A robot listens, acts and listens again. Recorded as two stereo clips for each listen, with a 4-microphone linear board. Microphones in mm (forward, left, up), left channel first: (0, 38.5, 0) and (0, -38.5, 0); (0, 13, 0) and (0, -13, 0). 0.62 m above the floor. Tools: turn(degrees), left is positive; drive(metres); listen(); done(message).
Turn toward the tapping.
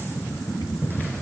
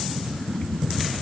listen()
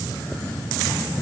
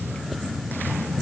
listen()
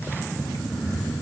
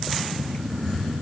done("I can't make out tapping to turn to.")